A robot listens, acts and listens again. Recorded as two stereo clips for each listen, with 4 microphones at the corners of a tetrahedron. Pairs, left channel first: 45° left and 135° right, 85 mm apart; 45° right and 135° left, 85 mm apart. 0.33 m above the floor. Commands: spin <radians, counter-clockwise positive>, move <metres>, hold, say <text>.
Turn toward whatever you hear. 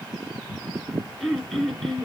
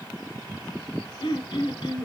spin -0.79
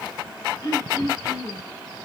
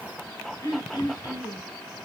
say Found it: throat clearing, straight ahead.